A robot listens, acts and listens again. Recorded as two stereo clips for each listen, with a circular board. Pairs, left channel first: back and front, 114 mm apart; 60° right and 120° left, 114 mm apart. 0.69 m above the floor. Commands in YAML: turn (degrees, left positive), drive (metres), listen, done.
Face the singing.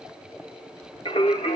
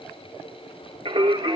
turn: 155
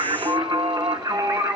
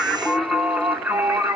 turn: 50
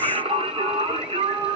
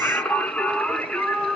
turn: 25
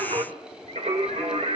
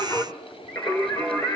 turn: 10
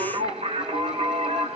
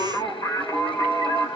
done: "Found it: singing, straight ahead, 2 to 4 m away."